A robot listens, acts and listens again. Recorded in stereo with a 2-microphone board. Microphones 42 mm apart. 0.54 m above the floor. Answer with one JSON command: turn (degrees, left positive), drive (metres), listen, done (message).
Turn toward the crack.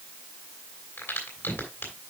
{"turn": 65}
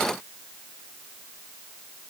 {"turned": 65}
{"listen": true}
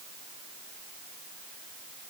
{"done": "I heard a crack, but can't make it out now. It was about straight ahead or 50° left."}